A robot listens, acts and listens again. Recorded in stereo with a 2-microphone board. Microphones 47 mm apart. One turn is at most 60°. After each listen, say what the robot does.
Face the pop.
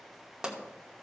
Turn 15° right.
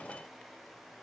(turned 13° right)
Keep listening.
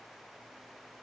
I heard a pop, but can't make it out now. It was about 5° right or 150° right.